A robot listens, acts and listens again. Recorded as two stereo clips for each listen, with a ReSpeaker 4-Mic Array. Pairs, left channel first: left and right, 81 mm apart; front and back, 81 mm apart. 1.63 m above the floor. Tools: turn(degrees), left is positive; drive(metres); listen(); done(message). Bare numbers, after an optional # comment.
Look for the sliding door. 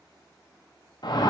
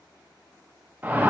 listen()
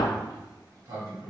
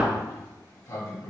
# The sliding door: 45° right.
turn(-45)
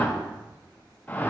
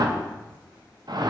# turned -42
done("Facing the sliding door, 2 to 4 m away.")